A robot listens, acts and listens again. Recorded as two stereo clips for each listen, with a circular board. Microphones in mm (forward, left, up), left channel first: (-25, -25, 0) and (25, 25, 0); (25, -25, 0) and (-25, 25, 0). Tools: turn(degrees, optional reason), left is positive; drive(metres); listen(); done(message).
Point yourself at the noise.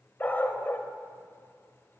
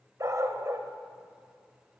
turn(degrees=175, reason="The dog barking: 175° left.")
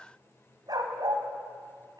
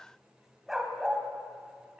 turn(degrees=60, reason="The dog barking is now 60° left.")
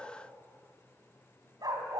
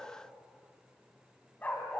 turn(degrees=25, reason="The dog barking is now 25° left.")
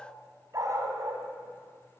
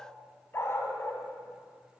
done("Found it: a dog barking, straight ahead, 2 to 4 m away.")